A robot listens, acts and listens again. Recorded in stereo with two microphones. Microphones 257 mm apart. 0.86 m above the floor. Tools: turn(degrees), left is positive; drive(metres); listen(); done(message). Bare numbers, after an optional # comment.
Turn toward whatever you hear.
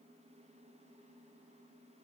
listen()
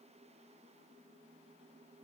listen()
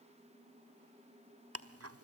# The ticking: about 65° right or 115° right.
turn(-65)
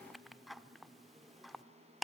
done("Facing the ticking, 1 to 2 m away.")